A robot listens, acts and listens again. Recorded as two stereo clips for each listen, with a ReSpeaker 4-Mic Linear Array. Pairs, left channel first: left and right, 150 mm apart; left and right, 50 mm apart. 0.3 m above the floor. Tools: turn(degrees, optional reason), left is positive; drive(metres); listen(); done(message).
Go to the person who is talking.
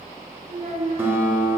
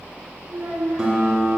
turn(degrees=-50, reason="The child speaking: about 50° right or 130° right.")
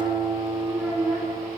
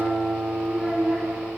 drive(metres=1.0)
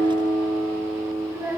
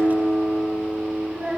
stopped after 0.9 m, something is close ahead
turn(degrees=-15, reason="The child speaking is now 15° right.")
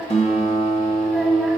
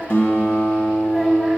listen()
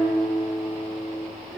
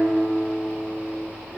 listen()
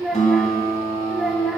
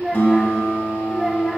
done("I am next to the child speaking.")